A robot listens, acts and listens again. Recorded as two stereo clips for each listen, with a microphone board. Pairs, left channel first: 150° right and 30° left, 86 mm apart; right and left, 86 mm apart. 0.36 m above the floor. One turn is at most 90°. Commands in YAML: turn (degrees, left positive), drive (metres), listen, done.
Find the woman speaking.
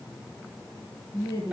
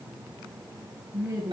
turn: 90
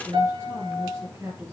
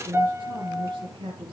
turn: 90
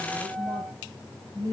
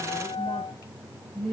done: "Found it: a woman speaking, straight ahead."